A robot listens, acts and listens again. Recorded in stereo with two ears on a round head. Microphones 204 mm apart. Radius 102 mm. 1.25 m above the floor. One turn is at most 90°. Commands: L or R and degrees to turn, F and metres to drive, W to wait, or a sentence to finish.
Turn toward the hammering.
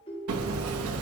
R75
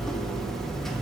Facing the hammering.